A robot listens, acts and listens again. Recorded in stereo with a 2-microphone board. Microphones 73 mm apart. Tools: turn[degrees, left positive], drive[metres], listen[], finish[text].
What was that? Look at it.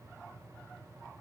Action: listen[]
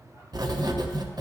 Thought: The writing: about 70° right or 110° right.
Action: turn[-70]
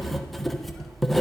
Action: finish[Facing the writing.]